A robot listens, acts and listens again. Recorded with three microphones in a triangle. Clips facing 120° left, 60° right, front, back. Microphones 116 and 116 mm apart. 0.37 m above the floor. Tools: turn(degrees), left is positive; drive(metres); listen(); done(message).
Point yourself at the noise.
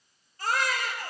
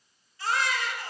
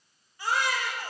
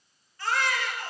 turn(degrees=75)
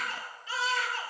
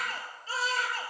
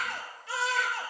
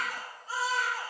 done("Facing the baby crying, 2 to 4 m away.")